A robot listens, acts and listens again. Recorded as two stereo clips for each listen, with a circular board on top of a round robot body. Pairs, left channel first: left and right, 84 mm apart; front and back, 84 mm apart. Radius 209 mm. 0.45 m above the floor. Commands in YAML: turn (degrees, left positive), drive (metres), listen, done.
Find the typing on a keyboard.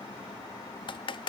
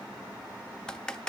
turn: 80
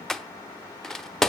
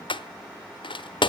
done: "Facing the typing on a keyboard, 1 to 2 m away."